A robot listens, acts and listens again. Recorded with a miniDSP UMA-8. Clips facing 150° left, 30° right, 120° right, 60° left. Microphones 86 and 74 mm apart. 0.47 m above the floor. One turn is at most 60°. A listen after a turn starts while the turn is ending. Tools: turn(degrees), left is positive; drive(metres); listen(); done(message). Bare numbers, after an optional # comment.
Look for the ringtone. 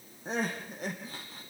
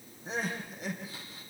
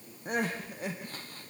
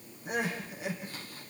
listen()
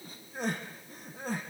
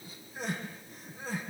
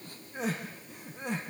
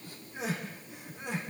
listen()
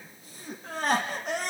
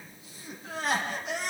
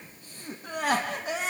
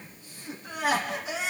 done("I can't make out a ringtone, only crying.")